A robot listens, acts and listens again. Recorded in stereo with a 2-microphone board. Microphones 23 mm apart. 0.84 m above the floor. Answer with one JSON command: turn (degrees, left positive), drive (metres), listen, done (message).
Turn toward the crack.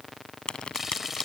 {"turn": 45}
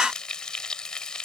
{"listen": true}
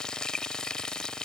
{"done": "I heard a crack, but can't make it out now. It was about straight ahead or 90° left."}